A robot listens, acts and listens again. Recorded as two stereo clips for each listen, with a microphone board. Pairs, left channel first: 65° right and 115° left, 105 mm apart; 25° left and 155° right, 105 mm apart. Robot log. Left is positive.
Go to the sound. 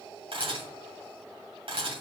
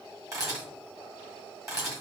note: The camera shutter: 145° left.
cmd yaw +145
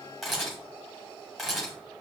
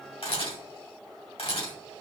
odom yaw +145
note: The camera shutter is now 25° left.
cmd yaw +25
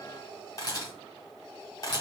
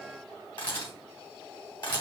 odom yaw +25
note: The camera shutter is now 15° right.
cmd yaw -15
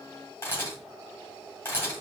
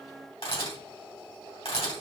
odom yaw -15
cmd fwd 1.0
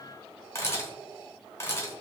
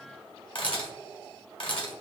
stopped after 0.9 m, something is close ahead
end: Arrived at the camera shutter, straight ahead.